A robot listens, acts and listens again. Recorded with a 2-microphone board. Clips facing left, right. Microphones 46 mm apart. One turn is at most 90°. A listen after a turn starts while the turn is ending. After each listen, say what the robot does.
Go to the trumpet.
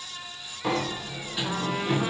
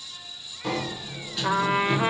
Turn 45° right.
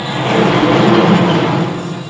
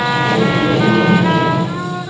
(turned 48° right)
Keep listening.
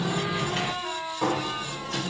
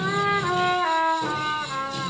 Turn 75° right.
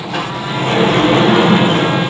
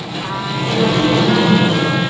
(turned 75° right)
Keep listening.
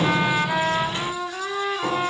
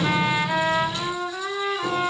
Drive 1.0 m forward.
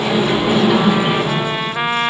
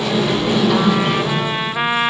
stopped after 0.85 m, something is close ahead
Arrived at the trumpet, straight ahead.